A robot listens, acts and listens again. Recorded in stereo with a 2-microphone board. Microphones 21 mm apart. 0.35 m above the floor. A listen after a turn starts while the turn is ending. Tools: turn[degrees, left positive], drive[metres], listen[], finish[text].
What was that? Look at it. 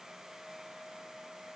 Action: listen[]
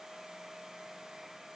Action: listen[]
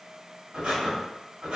Thought: The breathing: about 55° right or 125° right.
Action: turn[-55]
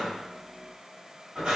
Thought: So it is at 55° right.
Action: turn[-55]
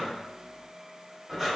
Action: finish[Found it: breathing, straight ahead, 1 to 2 m away.]